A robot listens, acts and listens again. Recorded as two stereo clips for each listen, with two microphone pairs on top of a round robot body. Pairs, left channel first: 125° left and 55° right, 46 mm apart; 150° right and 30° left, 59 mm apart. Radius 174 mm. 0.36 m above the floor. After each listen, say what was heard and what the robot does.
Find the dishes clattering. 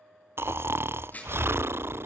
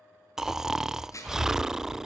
The dishes clattering: straight behind. Turn 180° left.
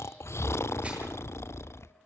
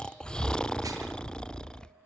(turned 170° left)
Nothing new. It was at 10° left. Turn 10° left.
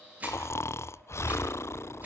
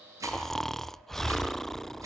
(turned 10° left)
Facing the dishes clattering, over 4 m away.